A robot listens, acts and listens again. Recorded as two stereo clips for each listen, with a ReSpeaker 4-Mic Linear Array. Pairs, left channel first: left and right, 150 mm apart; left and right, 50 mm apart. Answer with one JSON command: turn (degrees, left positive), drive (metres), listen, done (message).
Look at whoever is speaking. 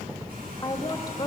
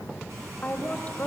{"turn": 25}
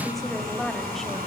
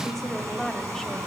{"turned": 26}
{"done": "Found it: a woman speaking, straight ahead."}